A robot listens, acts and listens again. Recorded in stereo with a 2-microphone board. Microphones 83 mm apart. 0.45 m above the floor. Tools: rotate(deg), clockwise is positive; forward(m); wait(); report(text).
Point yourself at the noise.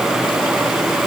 wait()
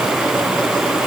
wait()
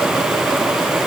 report("I can't make out anything to turn to.")